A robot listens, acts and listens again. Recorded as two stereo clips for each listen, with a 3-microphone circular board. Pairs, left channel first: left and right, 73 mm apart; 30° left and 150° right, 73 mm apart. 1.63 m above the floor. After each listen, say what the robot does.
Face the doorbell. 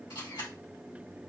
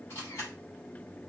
Keep listening.
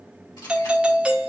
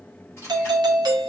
Turn 165° right.
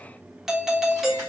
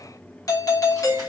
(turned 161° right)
Facing the doorbell, under 1 m away.